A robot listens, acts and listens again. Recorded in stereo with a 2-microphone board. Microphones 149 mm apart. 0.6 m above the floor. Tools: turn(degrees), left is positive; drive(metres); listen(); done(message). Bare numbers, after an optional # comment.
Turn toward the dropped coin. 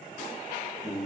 listen()
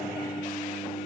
listen()
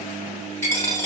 # The dropped coin: about 15° left or 165° left.
turn(15)
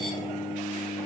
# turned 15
listen()
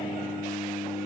done("I heard a dropped coin, but can't make it out now. It was about straight ahead or 150° left.")